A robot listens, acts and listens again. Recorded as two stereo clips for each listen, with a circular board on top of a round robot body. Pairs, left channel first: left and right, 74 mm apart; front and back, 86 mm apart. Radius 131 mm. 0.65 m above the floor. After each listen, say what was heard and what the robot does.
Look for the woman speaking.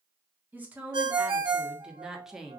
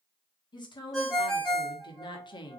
Facing the woman speaking, 1 to 2 m away.